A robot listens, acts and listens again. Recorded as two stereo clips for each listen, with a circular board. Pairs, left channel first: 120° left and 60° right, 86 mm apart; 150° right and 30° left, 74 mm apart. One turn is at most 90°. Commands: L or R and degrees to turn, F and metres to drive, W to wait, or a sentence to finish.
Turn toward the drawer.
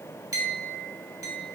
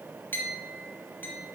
W
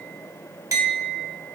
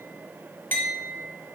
W
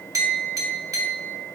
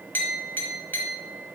I can't make out a drawer, only a clink.